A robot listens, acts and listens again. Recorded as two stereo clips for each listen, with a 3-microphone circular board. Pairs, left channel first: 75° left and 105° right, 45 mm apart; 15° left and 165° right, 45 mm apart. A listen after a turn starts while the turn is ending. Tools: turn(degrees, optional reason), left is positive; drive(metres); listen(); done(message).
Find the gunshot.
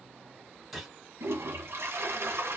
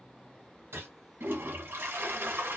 turn(degrees=165, reason="The gunshot: 165° left.")
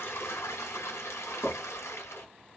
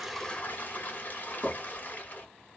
done("Facing where the gunshot came from. I can't hear it now.")